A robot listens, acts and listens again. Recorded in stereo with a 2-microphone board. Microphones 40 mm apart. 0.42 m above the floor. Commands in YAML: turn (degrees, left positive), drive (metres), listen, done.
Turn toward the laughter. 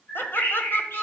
turn: 60
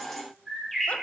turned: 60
listen: true
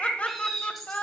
turn: 40
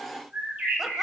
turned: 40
listen: true
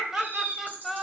done: "Found it: laughter, straight ahead, 1 to 2 m away."